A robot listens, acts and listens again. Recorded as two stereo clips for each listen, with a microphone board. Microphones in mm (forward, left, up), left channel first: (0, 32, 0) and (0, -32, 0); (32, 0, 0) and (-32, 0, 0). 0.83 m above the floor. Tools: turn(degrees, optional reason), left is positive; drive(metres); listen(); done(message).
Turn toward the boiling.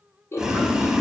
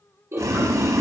turn(degrees=-170, reason="The boiling: 170° right.")
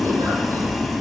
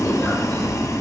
done("Found it: boiling, straight ahead, 1 to 2 m away.")